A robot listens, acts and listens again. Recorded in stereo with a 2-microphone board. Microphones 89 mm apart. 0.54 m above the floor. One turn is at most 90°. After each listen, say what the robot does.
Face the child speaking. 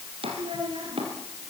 Turn 60° right.
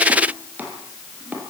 Keep listening.
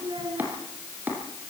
Turn 60° right.
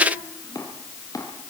Keep listening.
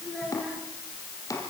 Found it: a child speaking, straight ahead.